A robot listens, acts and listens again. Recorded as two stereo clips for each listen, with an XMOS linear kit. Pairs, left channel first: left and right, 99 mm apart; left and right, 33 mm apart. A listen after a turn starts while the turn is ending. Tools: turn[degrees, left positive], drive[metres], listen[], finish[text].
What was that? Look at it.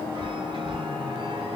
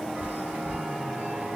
Thought: The chime: about 50° right or 130° right.
Action: turn[-50]
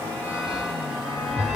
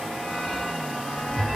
Action: finish[Facing the chime, 1 to 2 m away.]